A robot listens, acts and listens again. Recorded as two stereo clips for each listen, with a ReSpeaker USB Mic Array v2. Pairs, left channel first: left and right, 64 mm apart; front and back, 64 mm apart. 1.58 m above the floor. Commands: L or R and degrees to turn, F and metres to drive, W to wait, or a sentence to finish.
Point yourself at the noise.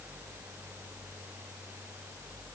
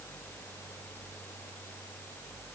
W
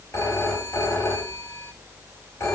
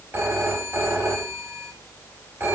L125
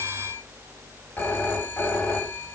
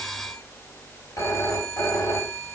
L35
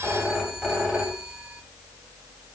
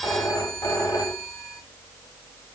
R15
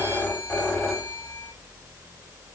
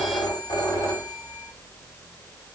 Facing the phone ringing, 2 to 4 m away.